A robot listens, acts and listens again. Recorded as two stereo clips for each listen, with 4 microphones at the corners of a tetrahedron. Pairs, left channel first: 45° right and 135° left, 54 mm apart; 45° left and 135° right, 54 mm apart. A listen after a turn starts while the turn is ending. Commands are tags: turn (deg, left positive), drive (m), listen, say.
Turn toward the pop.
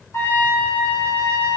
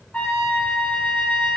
<listen/>
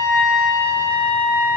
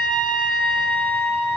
<listen/>
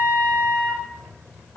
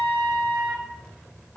<say>I can't make out a pop to turn to.</say>